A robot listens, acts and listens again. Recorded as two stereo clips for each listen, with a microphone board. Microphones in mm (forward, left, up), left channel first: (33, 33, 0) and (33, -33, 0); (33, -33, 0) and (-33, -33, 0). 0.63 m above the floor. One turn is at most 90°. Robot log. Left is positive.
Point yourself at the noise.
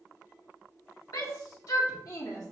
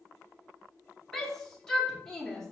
note: The shout: 80° left.
cmd yaw +80
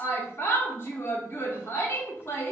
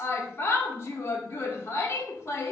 note: The shout is now 40° left.
cmd yaw +40
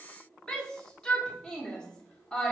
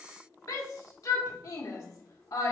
note: The shout is now 15° left.
cmd yaw +15
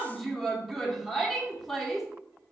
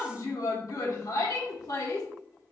end: Found it: a shout, straight ahead, 1 to 2 m away.